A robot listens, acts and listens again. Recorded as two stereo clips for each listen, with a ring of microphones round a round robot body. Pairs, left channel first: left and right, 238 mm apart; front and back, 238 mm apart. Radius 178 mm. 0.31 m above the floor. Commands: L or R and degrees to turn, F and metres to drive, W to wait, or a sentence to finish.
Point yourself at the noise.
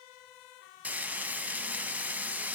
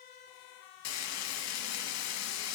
Facing the frying.